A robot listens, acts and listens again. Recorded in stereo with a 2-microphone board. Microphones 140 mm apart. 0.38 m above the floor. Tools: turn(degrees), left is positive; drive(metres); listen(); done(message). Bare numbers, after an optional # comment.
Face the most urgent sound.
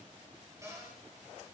listen()
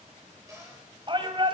# The shout: about 35° right or 145° right.
turn(-35)
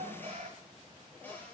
# So it is at 105° right.
turn(-105)
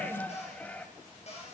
# The shout is now 10° left.
turn(10)
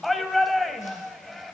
done("Facing the shout.")